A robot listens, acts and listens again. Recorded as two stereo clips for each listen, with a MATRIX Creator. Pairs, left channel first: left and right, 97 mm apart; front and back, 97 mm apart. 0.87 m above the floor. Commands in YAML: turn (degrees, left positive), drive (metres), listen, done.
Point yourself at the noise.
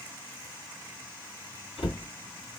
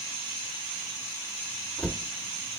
turn: 75
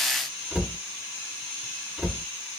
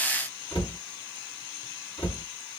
turn: -15
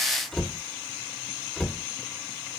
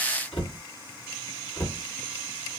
done: "Facing the cupboard door."